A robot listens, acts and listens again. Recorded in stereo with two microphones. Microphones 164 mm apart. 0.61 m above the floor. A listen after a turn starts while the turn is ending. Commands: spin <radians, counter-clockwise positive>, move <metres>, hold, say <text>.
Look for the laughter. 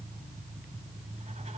hold
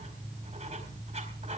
hold
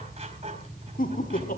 spin 1.05
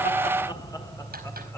spin 0.35
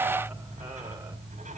hold
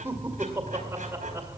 spin -0.26
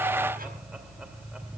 hold
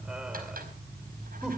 say Facing the laughter, 1 to 2 m away.